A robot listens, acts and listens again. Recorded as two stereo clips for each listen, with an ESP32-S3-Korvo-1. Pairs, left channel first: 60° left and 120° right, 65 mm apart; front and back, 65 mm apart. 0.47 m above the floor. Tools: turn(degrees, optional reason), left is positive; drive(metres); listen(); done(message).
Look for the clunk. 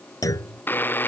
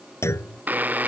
turn(degrees=40, reason="The clunk: 40° left.")
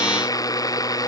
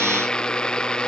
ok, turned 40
done("Facing where the clunk came from. I can't hear it now.")